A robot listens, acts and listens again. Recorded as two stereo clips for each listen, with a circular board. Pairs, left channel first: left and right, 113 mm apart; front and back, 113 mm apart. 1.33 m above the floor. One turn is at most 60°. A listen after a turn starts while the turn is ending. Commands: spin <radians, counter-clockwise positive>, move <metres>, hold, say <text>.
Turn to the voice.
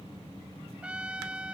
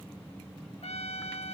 hold
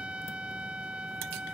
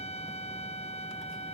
hold
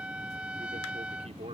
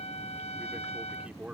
spin -1.05
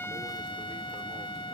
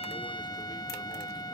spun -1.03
spin -0.79
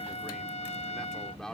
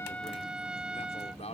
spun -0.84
say Facing the man speaking.